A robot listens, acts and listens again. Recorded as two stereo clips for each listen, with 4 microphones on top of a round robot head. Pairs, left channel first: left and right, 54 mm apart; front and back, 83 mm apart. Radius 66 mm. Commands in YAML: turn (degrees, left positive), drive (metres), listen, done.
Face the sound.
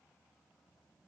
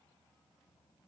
listen: true
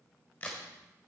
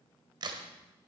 turn: 155
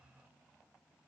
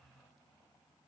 done: "I heard a crack from this way, but can't make it out now."